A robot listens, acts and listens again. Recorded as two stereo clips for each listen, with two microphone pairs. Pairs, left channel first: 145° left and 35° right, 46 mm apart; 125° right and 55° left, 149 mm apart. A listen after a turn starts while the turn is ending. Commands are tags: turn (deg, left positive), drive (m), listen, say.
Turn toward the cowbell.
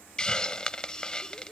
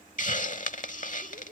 <listen/>
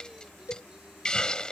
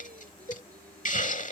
<turn deg="165"/>
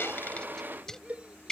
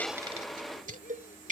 <turn deg="20"/>
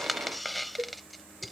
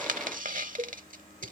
<turn deg="10"/>
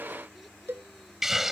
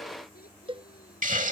<say>Facing the cowbell.</say>